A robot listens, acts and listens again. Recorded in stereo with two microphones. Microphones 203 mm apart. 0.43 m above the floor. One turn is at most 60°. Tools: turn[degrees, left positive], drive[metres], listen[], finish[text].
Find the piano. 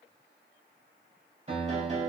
Thought: The piano: about 35° right or 145° right.
Action: turn[-35]
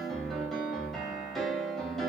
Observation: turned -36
Action: finish[Found it: a piano, straight ahead, under 1 m away.]